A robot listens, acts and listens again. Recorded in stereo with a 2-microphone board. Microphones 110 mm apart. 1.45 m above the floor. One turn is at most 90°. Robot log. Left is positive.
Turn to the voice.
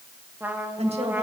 note: The woman speaking: about 70° right or 110° right.
cmd yaw -70
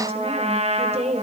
note: So it is at 75° right.
cmd yaw -75
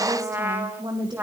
note: The woman speaking is now 45° right.
cmd yaw -45
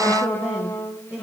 note: The woman speaking is now 25° right.
cmd yaw -25
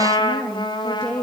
end: Found it: a woman speaking, straight ahead, 1 to 2 m away.